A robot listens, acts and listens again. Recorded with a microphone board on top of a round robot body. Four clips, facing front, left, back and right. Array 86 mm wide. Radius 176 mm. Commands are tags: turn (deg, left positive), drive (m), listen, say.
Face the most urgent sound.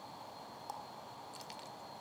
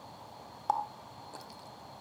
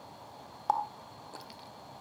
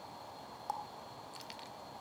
<listen/>
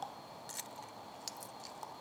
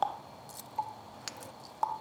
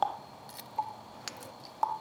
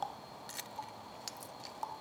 <listen/>
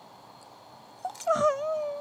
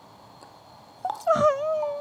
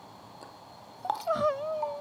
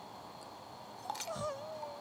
<turn deg="75"/>
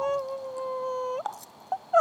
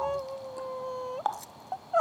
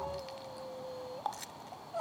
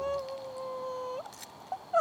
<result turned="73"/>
<say>Found it: crying, straight ahead.</say>